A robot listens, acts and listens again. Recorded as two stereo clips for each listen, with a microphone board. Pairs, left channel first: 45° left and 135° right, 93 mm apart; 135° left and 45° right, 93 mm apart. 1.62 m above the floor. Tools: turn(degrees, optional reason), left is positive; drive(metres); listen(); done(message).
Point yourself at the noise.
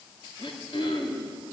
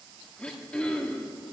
turn(degrees=55, reason="The throat clearing: 55° left.")
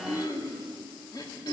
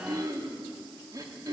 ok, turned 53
done("Facing the throat clearing, 2 to 4 m away.")